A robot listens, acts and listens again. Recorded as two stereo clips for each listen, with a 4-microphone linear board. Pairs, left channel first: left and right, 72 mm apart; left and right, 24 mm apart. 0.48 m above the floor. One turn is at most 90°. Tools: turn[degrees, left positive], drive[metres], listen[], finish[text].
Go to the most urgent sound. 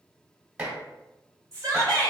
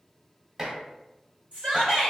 Thought: The shout: about 45° right or 135° right.
Action: turn[-45]
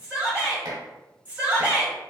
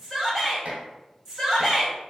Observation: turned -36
Thought: So it is at 20° right.
Action: turn[-20]
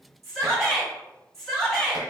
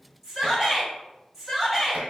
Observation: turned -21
Action: drive[1.0]
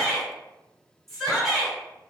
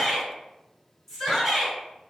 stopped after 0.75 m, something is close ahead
Action: finish[Arrived at the shout, straight ahead.]